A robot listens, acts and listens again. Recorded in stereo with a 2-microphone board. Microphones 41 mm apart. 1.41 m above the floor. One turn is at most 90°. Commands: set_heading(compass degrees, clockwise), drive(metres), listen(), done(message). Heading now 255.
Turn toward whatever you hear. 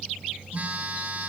set_heading(290)
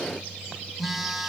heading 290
done("Found it: a phone buzzing, straight ahead, 1 to 2 m away.")